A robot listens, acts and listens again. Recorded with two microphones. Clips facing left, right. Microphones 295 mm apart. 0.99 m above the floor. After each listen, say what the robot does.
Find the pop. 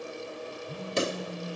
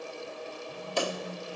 Turn 25° left.
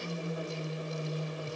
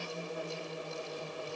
Keep listening.
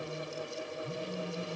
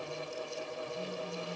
I heard a pop, but can't make it out now. It was about straight ahead or 130° left.